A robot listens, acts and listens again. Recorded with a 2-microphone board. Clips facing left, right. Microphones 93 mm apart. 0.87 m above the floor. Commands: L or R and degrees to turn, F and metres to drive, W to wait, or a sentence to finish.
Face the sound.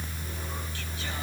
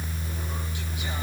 W
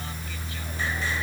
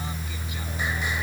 W
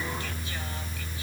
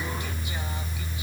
I can't make out anything to turn to.